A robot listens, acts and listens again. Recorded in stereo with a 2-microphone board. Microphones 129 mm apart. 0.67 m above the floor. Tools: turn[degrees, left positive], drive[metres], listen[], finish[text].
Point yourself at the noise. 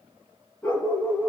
Action: turn[30]
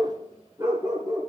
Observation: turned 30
Thought: So it is at 25° right.
Action: turn[-25]
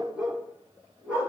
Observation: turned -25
Thought: The dog barking is now 10° right.
Action: turn[-10]
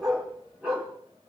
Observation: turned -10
Action: finish[Found it: a dog barking, straight ahead.]